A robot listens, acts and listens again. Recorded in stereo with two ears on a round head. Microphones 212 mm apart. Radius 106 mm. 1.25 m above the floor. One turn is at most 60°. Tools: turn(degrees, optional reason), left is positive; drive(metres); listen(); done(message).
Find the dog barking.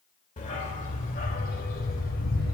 turn(degrees=40, reason="The dog barking: about 40° left or 140° left.")
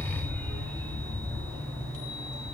turn(degrees=10, reason="So it is at 10° left.")
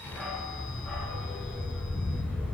done("Found it: a dog barking, straight ahead, over 4 m away.")